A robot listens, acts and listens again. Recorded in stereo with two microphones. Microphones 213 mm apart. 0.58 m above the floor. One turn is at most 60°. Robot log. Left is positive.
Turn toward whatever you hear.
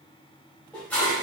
cmd yaw +30
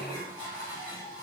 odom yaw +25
note: So it is at 20° right.
cmd yaw -20
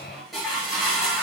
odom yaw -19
end: Found it: dishes clattering, straight ahead.